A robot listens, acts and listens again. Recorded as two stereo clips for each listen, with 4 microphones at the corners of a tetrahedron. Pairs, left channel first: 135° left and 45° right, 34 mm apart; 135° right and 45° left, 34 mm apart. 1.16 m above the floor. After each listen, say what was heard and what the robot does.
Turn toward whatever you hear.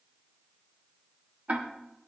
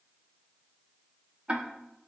Facing the ticking, 1 to 2 m away.